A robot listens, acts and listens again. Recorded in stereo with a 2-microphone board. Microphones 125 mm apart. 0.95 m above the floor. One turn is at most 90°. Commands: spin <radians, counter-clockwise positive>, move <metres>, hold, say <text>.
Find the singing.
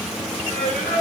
spin 1.31
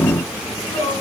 spin 0.61
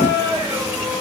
spin -0.35
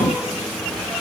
hold
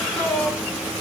say Found it: singing, straight ahead, over 4 m away.